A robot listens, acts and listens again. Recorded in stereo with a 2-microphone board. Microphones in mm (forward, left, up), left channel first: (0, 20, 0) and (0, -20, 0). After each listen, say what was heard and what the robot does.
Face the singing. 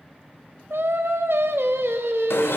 Turn 90° right.
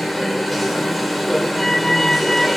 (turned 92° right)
Keep listening.
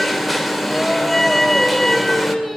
Found it: singing, straight ahead.